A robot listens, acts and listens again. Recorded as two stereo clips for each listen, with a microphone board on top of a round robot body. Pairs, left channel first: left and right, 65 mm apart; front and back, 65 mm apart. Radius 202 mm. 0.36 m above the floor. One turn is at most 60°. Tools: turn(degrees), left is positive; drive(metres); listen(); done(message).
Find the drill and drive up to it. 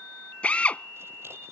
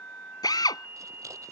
turn(degrees=20)
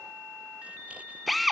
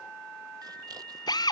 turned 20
drive(metres=1.0)
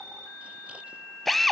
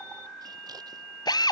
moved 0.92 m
drive(metres=1.0)
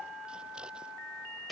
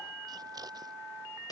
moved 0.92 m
drive(metres=1.0)
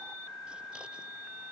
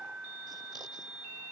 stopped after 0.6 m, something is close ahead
listen()
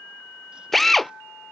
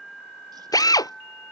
done("I am next to the drill.")